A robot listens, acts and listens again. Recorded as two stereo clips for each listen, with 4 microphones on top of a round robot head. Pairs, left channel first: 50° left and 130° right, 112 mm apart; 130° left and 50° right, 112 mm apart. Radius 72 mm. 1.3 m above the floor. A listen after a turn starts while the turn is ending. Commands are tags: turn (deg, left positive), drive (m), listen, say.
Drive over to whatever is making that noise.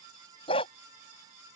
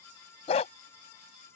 <turn deg="95"/>
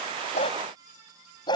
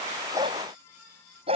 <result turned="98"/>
<drive m="1.0"/>
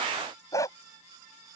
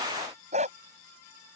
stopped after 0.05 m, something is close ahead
<turn deg="-15"/>
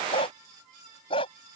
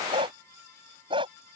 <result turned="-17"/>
<say>Something is in my way. I am facing the dog barking but have not reached it.</say>